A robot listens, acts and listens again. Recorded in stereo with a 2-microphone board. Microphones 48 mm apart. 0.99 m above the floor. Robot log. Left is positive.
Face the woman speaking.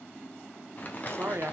note: The woman speaking: about 60° right or 120° right.
cmd yaw -60
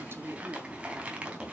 note: So it is at 50° right.
cmd yaw -50
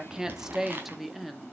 end: Found it: a woman speaking, straight ahead.